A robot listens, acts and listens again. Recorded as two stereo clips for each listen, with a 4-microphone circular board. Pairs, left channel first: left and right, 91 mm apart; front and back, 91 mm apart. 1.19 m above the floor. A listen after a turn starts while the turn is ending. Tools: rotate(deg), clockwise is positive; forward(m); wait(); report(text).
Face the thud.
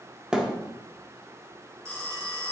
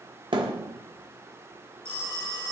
rotate(170)
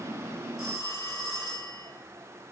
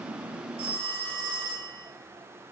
report("I heard a thud from this way, but can't make it out now.")